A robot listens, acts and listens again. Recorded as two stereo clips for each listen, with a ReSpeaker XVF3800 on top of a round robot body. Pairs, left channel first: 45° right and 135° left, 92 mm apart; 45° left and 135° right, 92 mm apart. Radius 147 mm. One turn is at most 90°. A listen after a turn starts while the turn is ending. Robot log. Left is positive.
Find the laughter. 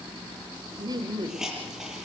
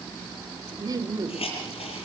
note: The laughter: 175° left.
cmd yaw +90
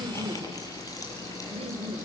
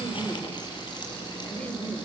note: The laughter is now 120° left.
cmd yaw +90
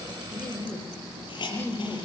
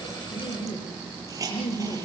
note: The laughter is now 20° left.
cmd yaw +20
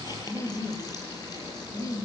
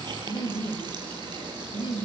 end: Facing the laughter.